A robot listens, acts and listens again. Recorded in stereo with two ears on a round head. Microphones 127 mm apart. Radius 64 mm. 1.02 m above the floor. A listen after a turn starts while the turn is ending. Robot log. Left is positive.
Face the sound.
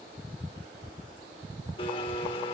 note: The blender: about 35° left or 145° left.
cmd yaw +35
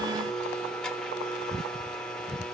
end: Facing the blender.